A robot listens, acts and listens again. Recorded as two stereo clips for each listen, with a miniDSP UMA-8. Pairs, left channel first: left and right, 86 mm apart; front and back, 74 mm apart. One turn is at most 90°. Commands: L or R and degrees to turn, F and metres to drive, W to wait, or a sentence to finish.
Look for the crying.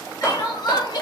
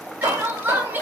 L90
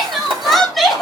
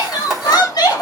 Found it: crying, straight ahead.